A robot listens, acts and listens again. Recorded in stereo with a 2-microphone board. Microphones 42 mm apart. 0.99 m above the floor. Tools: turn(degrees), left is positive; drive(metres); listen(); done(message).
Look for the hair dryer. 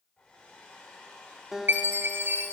turn(degrees=20)
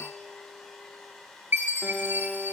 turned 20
done("Facing the hair dryer, over 4 m away.")